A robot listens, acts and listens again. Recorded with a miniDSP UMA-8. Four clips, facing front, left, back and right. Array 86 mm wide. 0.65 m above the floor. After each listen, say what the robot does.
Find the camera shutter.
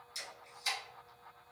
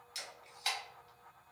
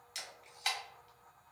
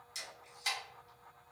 Turn 165° left.
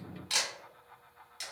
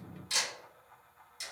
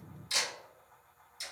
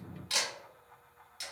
Turn 15° right.
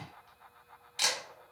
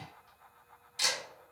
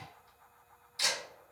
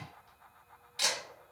Found it: a camera shutter, straight ahead.